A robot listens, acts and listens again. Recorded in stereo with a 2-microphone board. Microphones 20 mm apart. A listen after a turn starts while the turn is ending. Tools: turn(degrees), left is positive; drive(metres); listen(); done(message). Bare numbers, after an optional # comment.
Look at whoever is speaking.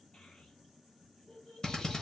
# The child speaking: about 65° left or 115° left.
turn(65)
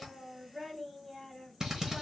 done("Found it: a child speaking, straight ahead.")